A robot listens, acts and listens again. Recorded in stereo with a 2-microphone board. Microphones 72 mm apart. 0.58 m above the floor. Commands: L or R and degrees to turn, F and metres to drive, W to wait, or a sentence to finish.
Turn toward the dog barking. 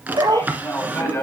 R75
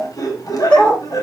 L20
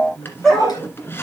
Facing the dog barking, 2 to 4 m away.